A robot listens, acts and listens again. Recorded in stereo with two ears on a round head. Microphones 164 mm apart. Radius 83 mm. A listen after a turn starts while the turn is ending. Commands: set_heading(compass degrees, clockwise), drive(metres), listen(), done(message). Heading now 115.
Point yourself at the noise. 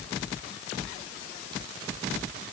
listen()
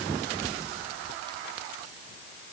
listen()
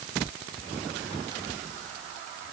done("I can't make out anything to turn to.")